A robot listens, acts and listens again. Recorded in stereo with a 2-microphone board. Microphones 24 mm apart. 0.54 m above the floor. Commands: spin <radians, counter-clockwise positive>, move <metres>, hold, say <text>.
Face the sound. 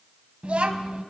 spin -1.13
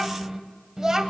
spin -0.44
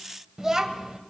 spin -0.52
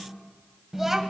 spin -0.26
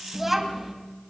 spin -0.17
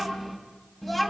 say Found it: a child speaking, straight ahead.